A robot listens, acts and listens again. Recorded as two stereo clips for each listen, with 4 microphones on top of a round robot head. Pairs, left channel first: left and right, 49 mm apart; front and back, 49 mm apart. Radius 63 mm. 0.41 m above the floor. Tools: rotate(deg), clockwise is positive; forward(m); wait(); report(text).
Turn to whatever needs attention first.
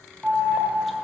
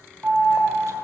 rotate(150)
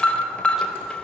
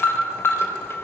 rotate(-25)
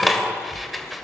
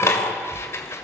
report("Facing the alarm.")